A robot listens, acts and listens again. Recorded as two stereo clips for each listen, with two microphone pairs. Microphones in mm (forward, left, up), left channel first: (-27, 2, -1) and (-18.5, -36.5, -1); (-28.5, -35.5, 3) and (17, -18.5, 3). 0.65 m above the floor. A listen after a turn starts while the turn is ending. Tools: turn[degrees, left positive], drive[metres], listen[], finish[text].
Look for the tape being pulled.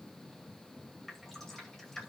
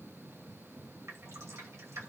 Action: listen[]
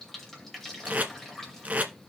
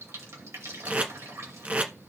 Thought: The tape being pulled: 35° right.
Action: turn[-35]
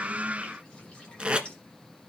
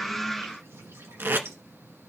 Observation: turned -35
Thought: The tape being pulled is now 15° right.
Action: turn[-15]
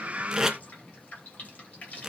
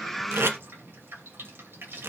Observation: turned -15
Action: finish[Found it: tape being pulled, straight ahead.]